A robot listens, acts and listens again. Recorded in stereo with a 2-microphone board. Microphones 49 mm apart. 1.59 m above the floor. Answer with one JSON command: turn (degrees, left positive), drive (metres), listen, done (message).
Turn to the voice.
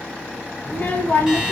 {"turn": 40}
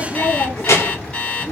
{"turn": 100}
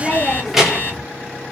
{"done": "Facing the child speaking."}